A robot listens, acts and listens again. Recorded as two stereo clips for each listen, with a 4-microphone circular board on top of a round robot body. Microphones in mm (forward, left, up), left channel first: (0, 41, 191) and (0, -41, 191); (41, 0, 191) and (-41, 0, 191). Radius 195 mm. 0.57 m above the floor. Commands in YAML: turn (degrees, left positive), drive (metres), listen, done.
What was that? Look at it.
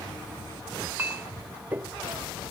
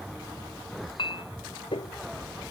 turn: -20
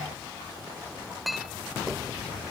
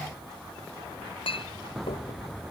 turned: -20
done: "Facing the clink."